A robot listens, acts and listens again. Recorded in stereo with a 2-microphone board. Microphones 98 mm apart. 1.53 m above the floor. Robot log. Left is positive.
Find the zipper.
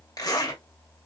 note: The zipper: about 40° left or 140° left.
cmd yaw +40
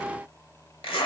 note: So it is at 95° left.
cmd yaw +95
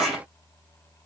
end: Found it: a zipper, straight ahead.